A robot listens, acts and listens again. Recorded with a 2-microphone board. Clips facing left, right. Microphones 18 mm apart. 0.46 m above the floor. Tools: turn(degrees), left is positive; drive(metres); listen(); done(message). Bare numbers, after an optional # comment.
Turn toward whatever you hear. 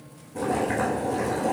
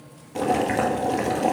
# The boiling: about 60° right or 120° right.
turn(-60)
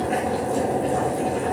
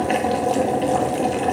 # So it is at 60° right.
turn(-60)
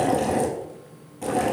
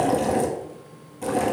done("Found it: boiling, straight ahead.")